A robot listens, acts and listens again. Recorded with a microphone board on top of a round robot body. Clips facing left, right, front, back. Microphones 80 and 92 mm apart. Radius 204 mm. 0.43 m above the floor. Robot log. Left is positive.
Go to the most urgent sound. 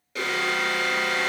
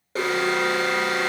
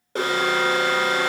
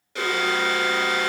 note: The alarm: 40° right.
cmd yaw -40
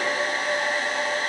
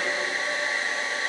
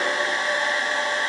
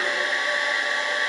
cmd idle
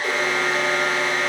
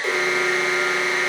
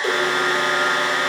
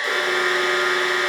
cmd fwd 1.0
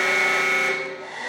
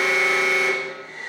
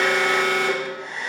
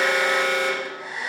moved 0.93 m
cmd fwd 1.0
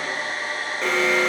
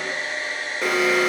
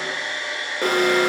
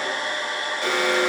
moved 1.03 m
note: The alarm is now 10° right.
cmd yaw -10
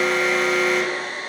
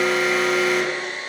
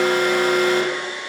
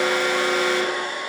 cmd fwd 1.0
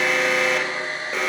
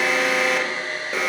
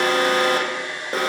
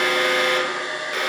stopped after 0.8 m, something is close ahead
end: Arrived at the alarm, straight ahead.